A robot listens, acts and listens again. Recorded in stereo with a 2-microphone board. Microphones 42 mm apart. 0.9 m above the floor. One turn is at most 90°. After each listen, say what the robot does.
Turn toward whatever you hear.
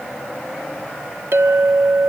Turn 70° right.
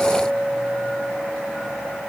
Facing the clink.